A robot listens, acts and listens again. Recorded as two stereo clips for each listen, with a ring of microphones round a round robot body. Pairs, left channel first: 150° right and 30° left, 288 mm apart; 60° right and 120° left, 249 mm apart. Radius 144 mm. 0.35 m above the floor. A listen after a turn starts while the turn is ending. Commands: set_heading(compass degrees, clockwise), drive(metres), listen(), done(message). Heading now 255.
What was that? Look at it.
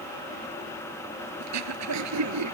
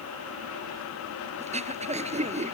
set_heading(195)
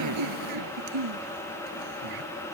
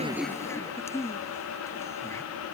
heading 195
set_heading(175)
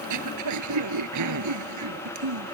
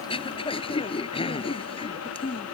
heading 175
done("Facing the throat clearing.")